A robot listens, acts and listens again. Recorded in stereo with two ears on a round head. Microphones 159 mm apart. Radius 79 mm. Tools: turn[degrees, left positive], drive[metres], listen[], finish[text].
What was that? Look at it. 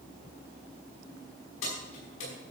Action: turn[90]
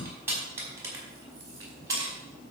Thought: So it is at 20° right.
Action: turn[-20]
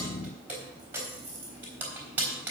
Thought: The keys jangling is now 10° right.
Action: turn[-10]
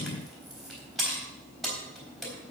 Action: finish[Found it: keys jangling, straight ahead.]